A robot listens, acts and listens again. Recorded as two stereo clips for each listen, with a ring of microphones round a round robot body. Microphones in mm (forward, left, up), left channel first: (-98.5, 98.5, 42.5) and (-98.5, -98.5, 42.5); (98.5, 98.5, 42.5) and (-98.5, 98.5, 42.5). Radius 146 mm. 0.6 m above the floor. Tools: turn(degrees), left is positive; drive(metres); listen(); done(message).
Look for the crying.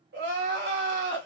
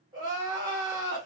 turn(degrees=-110)
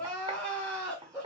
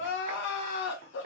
done("Facing the crying.")